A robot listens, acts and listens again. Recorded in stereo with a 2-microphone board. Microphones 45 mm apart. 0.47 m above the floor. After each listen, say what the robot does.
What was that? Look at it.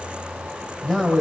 Turn 30° left.
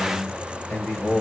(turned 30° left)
Turn 135° left.
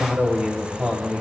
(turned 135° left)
Turn 30° right.
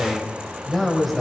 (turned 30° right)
Facing the man speaking, 2 to 4 m away.